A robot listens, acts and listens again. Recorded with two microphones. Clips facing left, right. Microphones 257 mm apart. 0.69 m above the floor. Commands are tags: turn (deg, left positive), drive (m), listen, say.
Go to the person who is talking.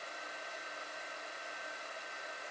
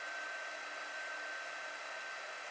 <listen/>
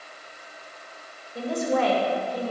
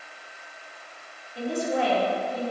<turn deg="90"/>
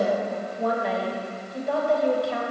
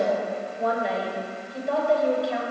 <drive m="1.0"/>
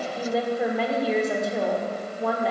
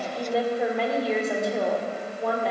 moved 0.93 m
<drive m="1.0"/>
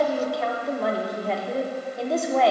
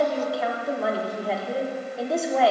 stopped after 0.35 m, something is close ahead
<say>I am next to the woman speaking.</say>